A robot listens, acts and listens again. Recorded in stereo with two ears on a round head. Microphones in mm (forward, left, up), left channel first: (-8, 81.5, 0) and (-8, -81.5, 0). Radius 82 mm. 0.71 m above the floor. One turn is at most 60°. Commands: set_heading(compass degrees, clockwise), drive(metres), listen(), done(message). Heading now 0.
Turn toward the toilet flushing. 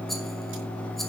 listen()
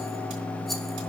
listen()
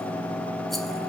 done("I can't make out a toilet flushing.")